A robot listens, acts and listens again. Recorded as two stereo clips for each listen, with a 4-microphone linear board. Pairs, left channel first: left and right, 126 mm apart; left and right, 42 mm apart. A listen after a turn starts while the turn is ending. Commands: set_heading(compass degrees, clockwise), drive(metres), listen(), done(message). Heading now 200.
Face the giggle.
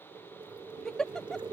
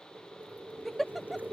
set_heading(170)
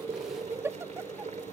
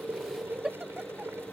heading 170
set_heading(190)
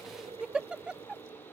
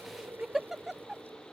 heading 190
set_heading(200)
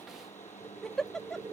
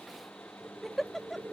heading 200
done("Facing the giggle.")